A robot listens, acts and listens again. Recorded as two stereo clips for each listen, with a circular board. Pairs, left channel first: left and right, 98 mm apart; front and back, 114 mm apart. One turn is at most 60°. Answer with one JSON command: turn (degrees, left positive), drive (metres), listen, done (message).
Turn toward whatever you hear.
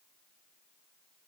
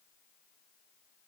{"listen": true}
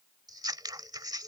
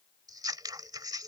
{"turn": -60}
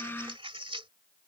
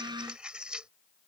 {"turn": -60}
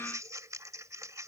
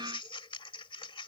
{"turn": -35}
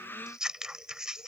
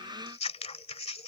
{"done": "Found it: scissors, straight ahead."}